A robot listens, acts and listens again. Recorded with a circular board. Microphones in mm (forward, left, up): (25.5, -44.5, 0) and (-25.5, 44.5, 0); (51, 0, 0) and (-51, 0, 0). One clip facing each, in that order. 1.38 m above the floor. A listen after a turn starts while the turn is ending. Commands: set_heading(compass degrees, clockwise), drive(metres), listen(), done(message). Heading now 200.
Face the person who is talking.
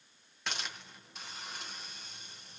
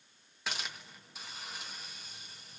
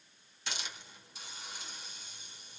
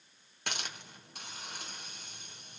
listen()
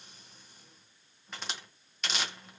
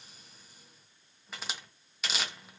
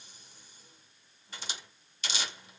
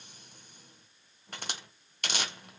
listen()
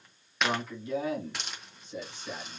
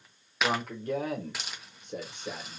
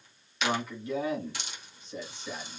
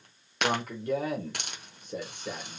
set_heading(55)
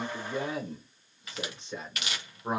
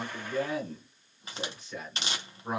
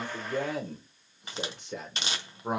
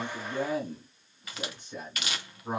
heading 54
done("Found it: a man speaking, straight ahead, 1 to 2 m away.")